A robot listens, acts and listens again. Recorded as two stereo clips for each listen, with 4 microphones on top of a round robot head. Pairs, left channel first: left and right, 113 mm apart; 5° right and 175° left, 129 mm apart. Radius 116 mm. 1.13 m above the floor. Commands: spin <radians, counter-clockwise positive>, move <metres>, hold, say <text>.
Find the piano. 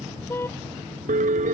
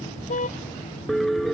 spin -1.66
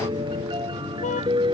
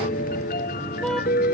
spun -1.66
spin -0.52
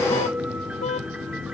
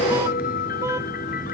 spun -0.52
say Found it: a piano, straight ahead.